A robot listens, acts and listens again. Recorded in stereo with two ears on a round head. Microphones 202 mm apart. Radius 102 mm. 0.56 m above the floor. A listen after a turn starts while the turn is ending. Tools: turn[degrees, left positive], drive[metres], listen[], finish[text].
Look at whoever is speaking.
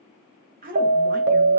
Thought: The woman speaking: about 40° right or 140° right.
Action: turn[-40]
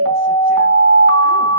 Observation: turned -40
Action: listen[]
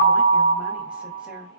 Action: listen[]
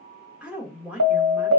Action: finish[Found it: a woman speaking, straight ahead, 1 to 2 m away.]